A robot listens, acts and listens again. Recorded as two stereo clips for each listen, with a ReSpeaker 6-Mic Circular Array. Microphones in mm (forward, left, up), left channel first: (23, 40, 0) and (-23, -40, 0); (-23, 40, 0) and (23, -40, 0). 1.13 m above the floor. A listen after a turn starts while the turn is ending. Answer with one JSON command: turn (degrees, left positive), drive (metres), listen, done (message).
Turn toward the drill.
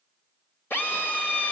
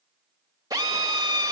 {"done": "Facing the drill."}